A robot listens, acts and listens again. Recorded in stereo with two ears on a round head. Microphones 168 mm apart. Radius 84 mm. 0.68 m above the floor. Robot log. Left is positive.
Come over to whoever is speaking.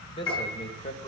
note: The man speaking: about 30° left or 150° left.
cmd yaw +30
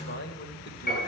note: So it is at 120° left.
cmd yaw +120
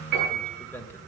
cmd idle
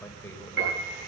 cmd idle
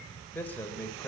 note: The man speaking is now 10° left.
cmd yaw +10
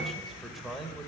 cmd fwd 1.0
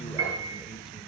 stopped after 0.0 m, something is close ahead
cmd idle
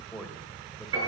end: Blocked. The man speaking is further on, straight ahead.